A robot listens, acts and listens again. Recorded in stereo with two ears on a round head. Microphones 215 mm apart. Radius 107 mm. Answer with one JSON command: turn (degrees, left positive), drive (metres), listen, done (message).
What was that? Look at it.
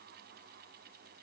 {"listen": true}
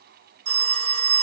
{"turn": -45}
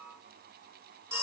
{"turn": -15}
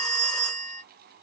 {"done": "Facing the phone ringing."}